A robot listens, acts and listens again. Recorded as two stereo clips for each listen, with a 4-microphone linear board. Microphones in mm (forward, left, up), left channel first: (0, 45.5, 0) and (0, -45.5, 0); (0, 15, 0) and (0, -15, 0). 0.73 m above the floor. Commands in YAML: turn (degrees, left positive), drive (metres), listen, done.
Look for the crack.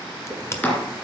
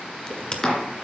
turn: 30
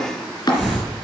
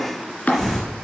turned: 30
listen: true
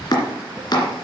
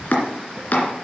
done: "I heard a crack, but can't make it out now. It was about straight ahead or 120° left."